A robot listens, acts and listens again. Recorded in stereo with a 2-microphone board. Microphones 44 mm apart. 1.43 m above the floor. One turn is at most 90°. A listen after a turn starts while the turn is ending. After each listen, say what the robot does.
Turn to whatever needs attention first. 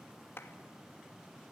Keep listening.
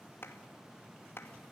Keep listening.
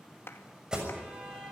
Turn 15° right.
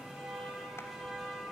Facing the alarm.